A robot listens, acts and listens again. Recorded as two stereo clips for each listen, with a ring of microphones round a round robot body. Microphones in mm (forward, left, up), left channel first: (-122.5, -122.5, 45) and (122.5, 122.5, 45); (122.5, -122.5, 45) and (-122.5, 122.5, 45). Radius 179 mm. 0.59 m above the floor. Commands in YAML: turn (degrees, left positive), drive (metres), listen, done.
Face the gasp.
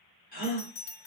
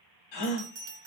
turn: -70
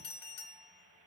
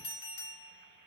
done: "Facing where the gasp came from. I can't hear it now."